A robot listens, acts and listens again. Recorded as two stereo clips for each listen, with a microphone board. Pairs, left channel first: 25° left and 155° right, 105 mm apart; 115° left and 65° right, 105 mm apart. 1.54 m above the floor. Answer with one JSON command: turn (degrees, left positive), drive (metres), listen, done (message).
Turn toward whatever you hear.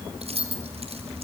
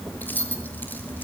{"turn": -175}
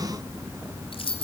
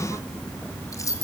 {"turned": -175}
{"turn": 55}
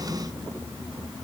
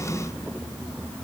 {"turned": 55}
{"listen": true}
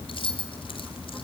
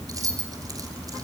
{"turn": -10}
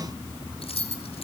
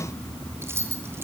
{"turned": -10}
{"done": "Facing the keys jangling, 2 to 4 m away."}